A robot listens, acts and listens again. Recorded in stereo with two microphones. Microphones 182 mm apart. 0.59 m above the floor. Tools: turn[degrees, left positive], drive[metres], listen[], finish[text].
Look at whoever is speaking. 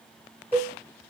Action: listen[]
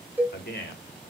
Thought: The man speaking: about 65° left or 115° left.
Action: turn[65]
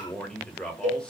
Action: finish[Found it: a man speaking, straight ahead.]